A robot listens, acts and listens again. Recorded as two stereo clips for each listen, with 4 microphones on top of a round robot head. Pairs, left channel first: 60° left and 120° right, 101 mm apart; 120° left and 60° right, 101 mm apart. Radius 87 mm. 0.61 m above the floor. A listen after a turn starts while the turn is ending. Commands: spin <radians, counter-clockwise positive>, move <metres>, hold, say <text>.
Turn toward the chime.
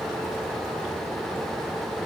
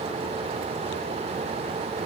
hold
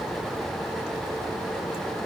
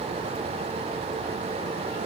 hold
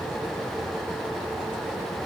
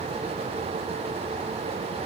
say I can't make out a chime to turn to.